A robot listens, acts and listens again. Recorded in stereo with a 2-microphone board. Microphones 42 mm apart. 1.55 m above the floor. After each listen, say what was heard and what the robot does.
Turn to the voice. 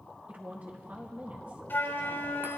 The woman speaking: about 45° right or 135° right. Turn 45° right.
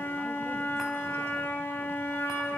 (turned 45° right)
Keep listening.
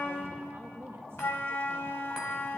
So it is at 95° right. Turn 95° right.
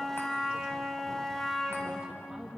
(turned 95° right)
The woman speaking is now 15° right. Turn 15° right.
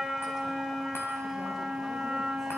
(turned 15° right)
Keep listening.
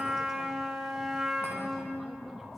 Keep listening.
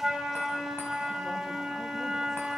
Facing where the woman speaking came from. I can't hear it now.